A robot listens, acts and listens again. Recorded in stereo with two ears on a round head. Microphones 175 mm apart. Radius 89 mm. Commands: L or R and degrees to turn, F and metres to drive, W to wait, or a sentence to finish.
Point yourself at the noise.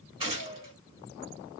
R25
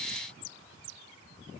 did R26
W
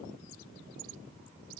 I heard a gunshot, but can't make it out now. It was about straight ahead or 125° right.